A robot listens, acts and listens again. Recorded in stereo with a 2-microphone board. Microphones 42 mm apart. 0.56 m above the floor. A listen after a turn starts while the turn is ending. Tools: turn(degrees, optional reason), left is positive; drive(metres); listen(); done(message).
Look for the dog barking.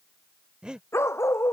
turn(degrees=90)
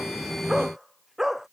done("Found it: a dog barking, straight ahead.")